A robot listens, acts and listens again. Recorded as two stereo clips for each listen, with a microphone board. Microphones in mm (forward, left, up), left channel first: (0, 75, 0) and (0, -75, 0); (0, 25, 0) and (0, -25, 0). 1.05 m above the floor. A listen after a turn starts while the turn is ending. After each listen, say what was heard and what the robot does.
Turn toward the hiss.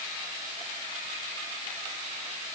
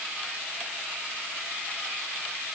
Keep listening.
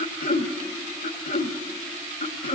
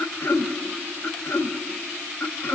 Keep listening.
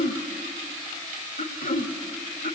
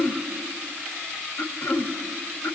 I can't make out a hiss, only throat clearing.